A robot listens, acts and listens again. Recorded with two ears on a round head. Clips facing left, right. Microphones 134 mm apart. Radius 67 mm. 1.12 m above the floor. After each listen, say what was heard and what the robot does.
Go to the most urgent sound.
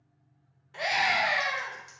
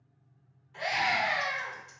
Turn 90° left.
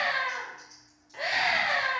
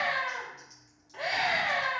So it is at 10° left. Turn 10° left.
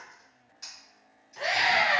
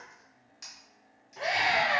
Drive 1.0 m forward.
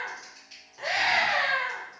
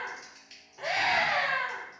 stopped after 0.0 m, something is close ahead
Blocked. The scream is further on, straight ahead.